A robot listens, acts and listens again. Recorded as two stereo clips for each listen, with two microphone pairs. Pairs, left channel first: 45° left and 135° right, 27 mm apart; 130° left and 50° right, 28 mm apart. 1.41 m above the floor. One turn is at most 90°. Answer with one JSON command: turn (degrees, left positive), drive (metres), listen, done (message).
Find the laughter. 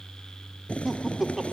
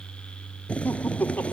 {"turn": 90}
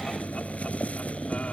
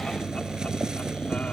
{"turn": 50}
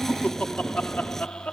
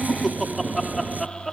{"turn": 40}
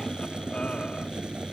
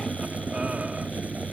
{"listen": true}
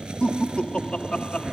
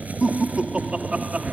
{"done": "Found it: laughter, straight ahead."}